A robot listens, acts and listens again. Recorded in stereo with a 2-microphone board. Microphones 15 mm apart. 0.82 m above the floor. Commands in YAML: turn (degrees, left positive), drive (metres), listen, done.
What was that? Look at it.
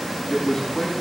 turn: 65
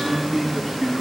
done: "Facing the man speaking."